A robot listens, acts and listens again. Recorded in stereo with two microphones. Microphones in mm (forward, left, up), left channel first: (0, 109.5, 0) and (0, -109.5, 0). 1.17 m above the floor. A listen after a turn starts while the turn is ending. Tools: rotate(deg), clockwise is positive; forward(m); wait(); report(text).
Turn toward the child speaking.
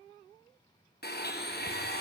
wait()
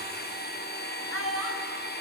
rotate(-90)
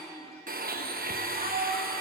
rotate(40)
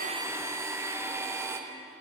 wait()
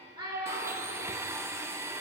rotate(20)
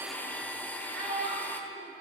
report("Found it: a child speaking, straight ahead.")